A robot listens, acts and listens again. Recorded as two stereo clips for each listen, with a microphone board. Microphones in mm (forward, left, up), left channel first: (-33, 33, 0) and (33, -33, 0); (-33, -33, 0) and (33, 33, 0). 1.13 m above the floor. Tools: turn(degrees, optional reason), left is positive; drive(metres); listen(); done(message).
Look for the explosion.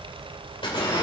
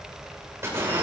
turn(degrees=105, reason="The explosion: 105° left.")
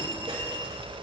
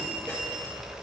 done("Facing where the explosion came from. I can't hear it now.")